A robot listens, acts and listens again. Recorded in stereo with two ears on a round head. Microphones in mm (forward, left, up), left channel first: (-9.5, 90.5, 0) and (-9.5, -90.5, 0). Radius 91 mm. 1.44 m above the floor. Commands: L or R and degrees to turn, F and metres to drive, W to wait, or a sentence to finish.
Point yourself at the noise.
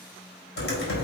L55
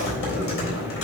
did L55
L70
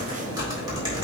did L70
R20
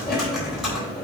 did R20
Found it: typing on a keyboard, straight ahead, 2 to 4 m away.